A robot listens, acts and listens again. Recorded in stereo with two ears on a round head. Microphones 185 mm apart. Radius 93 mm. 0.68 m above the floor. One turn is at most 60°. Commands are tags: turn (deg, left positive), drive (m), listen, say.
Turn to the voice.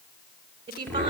<turn deg="-25"/>
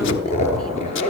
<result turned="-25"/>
<listen/>
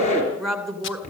<say>Facing the woman speaking.</say>